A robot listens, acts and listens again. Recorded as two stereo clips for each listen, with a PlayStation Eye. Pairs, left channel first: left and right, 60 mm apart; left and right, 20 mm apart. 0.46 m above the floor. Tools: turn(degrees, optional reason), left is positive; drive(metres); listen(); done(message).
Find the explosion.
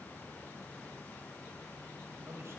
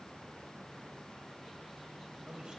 listen()
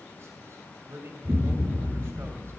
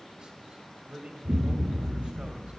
turn(degrees=-60, reason="The explosion: about 60° right or 120° right.")
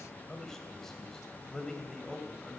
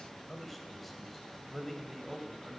listen()
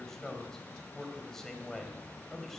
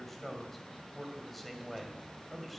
done("I heard an explosion, but can't make it out now. It was about straight ahead or 60° right.")